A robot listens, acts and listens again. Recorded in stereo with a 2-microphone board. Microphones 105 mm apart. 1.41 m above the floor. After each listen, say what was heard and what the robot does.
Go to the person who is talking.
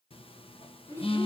The child speaking: about 25° left or 155° left. Turn 25° left.
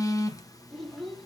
Drive 1.0 m forward.
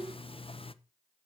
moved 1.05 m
The child speaking is now 10° right. Turn 10° right.
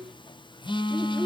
Drive 1.0 m forward.
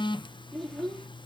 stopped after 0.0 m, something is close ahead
Arrived at the child speaking, straight ahead.